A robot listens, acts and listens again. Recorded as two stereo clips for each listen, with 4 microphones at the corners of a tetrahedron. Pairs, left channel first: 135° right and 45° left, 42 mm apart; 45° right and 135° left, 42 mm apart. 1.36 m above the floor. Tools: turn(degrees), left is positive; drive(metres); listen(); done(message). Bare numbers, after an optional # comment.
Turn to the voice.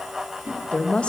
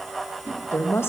# The woman speaking: 65° right.
turn(-65)
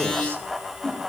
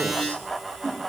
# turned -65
listen()
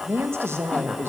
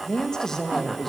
# The woman speaking is now 40° left.
turn(40)
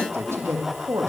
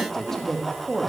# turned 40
# The woman speaking is now 45° left.
turn(45)
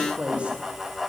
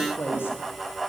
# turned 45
# The woman speaking is now 15° right.
turn(-15)
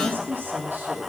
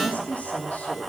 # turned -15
# The woman speaking is now 10° left.
turn(10)
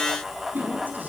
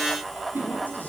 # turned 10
listen()
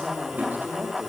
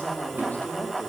done("Found it: a woman speaking, straight ahead.")